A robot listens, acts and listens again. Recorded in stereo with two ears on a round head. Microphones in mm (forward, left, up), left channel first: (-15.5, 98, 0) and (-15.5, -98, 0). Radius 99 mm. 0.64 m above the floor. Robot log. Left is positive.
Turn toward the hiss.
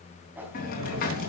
note: The hiss: about 40° left or 140° left.
cmd yaw +40
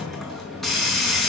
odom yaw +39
end: Found it: a hiss, straight ahead.